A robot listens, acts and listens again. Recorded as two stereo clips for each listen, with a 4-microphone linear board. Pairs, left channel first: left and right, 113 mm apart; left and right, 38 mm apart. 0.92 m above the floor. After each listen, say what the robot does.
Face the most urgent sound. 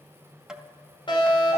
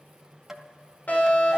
Turn 45° left.
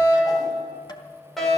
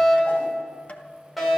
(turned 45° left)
Found it: a fire alarm, straight ahead, over 4 m away.